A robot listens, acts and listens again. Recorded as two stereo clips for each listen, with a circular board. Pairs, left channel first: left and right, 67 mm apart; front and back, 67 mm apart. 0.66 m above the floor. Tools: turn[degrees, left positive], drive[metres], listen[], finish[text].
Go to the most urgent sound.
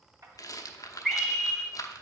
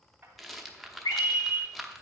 Action: drive[1.0]
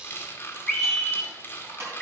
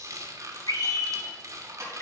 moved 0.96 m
Action: drive[1.0]
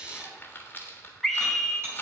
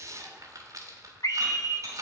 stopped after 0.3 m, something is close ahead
Action: finish[I am next to the scream.]